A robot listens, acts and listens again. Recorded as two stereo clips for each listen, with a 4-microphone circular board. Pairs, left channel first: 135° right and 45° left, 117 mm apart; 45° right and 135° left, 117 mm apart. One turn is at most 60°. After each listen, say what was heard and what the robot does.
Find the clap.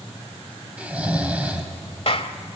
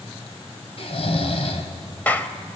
The clap: 120° right. Turn 60° right.
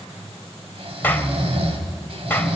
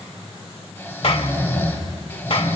The clap is now 65° right. Turn 60° right.
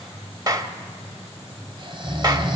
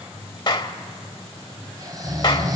Found it: a clap, straight ahead.